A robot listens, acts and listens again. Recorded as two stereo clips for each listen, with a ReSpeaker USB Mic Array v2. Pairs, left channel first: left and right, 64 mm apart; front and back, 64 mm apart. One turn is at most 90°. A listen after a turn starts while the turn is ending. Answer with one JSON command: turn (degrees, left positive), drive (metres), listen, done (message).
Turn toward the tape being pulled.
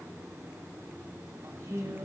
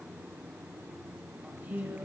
{"listen": true}
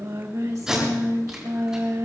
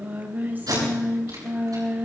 {"turn": -90}
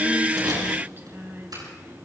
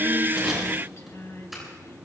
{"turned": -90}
{"turn": -80}
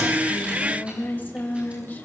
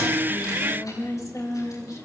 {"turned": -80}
{"listen": true}
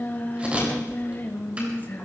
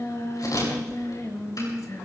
{"turn": -20}
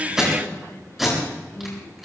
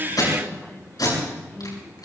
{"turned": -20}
{"done": "Found it: tape being pulled, straight ahead, over 4 m away."}